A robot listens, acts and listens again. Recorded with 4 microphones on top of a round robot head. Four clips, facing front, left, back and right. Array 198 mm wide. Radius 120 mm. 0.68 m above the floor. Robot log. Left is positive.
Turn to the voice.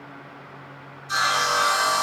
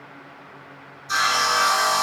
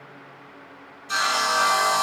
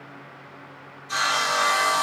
cmd idle
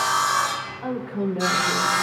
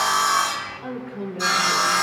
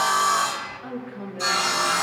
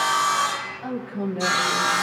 note: The woman speaking: 10° left.
cmd yaw +10
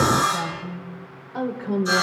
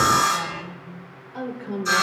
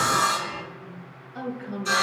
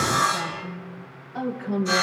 end: Found it: a woman speaking, straight ahead.